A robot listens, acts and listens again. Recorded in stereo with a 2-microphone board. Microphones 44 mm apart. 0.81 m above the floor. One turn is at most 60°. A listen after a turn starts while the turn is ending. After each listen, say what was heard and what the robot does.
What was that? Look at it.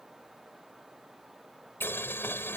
The boiling: about 70° left or 110° left. Turn 60° left.
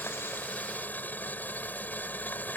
So it is at 45° left. Turn 45° left.
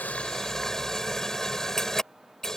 The boiling is now 10° left. Turn 10° left.
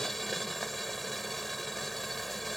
Facing the boiling.